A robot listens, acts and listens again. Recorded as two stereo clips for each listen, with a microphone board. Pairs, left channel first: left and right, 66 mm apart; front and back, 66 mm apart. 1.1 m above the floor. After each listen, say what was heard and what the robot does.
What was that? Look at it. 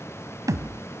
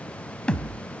The thud: 75° right. Turn 75° right.
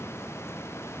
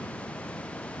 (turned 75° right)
I heard a thud from this way, but can't make it out now.